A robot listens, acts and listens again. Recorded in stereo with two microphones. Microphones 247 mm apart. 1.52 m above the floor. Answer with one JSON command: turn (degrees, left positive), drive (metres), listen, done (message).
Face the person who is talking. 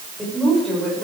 {"turn": 30}
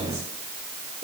{"listen": true}
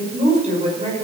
{"turn": -25}
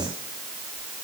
{"listen": true}
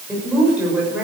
{"done": "Found it: a woman speaking, straight ahead."}